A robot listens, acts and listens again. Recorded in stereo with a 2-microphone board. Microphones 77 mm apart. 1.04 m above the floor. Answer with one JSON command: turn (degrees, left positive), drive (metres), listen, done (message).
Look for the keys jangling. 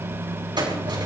{"turn": -90}
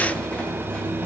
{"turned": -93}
{"listen": true}
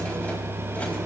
{"listen": true}
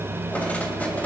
{"turn": 20}
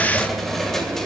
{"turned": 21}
{"done": "Found it: keys jangling, straight ahead, 2 to 4 m away."}